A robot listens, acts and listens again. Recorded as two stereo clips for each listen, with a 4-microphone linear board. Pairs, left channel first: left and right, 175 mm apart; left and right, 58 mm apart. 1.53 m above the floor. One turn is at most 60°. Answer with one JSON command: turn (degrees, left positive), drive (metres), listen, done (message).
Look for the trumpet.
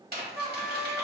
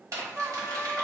{"turn": -35}
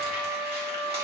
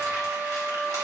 {"turn": -60}
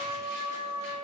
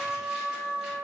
{"turn": -50}
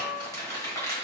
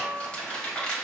{"turn": -15}
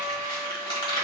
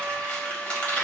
{"done": "Found it: a trumpet, straight ahead, 1 to 2 m away."}